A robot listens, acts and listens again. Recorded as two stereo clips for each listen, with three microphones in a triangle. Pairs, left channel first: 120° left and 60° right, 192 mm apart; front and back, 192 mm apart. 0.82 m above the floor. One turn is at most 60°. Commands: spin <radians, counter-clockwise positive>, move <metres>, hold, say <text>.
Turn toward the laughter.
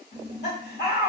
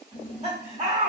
spin 1.05
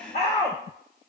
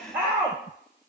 spin 1.05
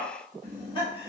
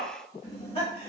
spin 1.05
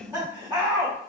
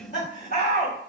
spin 0.17
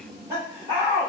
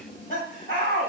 say Found it: laughter, straight ahead, 2 to 4 m away.